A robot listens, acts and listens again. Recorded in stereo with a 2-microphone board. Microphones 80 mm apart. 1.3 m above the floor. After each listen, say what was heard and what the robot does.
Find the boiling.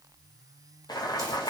The boiling: about 55° left or 125° left. Turn 55° left.
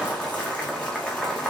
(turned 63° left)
Found it: boiling, straight ahead, under 1 m away.